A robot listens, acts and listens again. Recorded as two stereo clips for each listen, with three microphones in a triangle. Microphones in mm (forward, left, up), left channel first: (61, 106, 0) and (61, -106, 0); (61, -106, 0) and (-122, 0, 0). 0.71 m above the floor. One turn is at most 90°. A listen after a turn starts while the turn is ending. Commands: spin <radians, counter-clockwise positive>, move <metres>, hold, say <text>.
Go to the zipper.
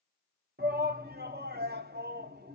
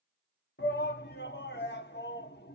hold
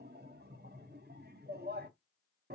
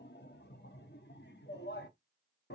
hold
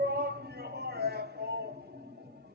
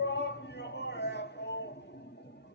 say I can't make out a zipper to turn to.